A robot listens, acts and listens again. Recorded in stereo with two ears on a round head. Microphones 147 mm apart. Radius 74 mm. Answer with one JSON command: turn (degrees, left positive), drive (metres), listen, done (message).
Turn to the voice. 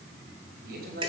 {"turn": -60}
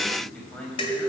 {"done": "Found it: a man speaking, straight ahead."}